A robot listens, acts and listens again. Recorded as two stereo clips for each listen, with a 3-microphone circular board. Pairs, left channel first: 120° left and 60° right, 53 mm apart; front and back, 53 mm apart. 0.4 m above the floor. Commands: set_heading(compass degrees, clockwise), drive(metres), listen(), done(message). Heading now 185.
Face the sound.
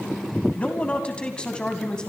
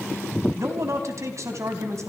set_heading(350)
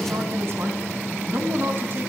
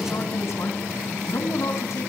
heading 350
set_heading(5)
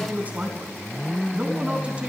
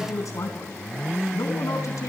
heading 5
done("Facing the man speaking.")